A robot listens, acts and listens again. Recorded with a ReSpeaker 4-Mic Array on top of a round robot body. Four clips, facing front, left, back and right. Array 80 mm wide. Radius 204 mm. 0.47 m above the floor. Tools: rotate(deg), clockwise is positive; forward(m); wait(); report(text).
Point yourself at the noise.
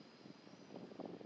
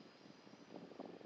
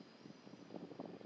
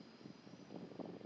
wait()
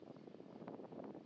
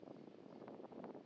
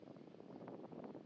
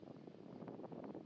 wait()
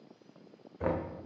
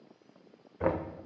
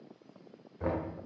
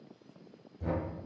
rotate(-80)
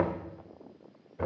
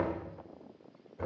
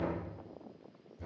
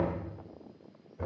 report("Found it: knocking, straight ahead, 1 to 2 m away.")